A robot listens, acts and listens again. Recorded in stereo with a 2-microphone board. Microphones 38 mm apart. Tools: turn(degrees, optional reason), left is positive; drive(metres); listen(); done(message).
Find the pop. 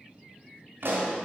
turn(degrees=-70, reason="The pop: about 70° right or 110° right.")
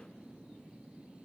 listen()
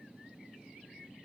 done("I heard a pop, but can't make it out now. It was about straight ahead or 40° right.")